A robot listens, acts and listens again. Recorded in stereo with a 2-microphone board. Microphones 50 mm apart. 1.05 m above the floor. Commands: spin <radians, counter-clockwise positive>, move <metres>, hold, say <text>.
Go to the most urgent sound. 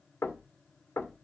hold
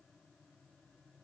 hold
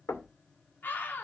spin 0.79
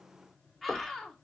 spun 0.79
move 1.0
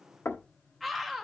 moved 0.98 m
move 1.0
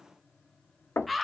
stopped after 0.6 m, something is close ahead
say Arrived at the scream, straight ahead.